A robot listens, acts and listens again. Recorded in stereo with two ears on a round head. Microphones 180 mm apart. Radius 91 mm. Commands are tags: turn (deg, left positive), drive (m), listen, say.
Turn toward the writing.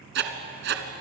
<turn deg="-60"/>
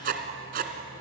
<turn deg="-50"/>
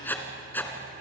<turn deg="10"/>
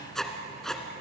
<say>Found it: writing, straight ahead, 2 to 4 m away.</say>